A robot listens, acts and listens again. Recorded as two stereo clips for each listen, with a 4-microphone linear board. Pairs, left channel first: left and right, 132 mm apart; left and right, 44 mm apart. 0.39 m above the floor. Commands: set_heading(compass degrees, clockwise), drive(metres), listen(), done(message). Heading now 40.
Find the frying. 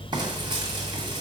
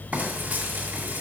set_heading(75)
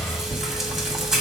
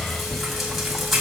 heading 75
done("Found it: frying, straight ahead.")